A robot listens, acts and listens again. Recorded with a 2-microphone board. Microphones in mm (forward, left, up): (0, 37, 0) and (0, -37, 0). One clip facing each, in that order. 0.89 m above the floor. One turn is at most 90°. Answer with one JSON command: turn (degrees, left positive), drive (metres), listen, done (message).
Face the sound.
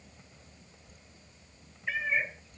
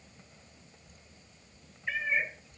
{"turn": 30}
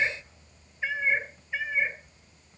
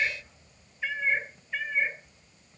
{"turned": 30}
{"turn": 30}
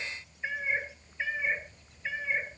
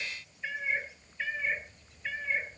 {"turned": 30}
{"turn": 30}
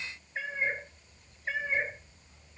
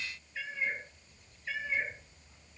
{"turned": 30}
{"turn": 90}
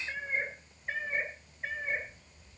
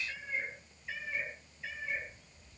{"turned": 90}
{"turn": 45}
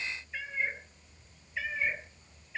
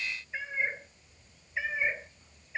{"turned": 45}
{"turn": -20}
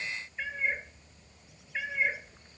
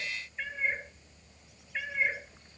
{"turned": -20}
{"done": "Found it: a cat meowing, straight ahead."}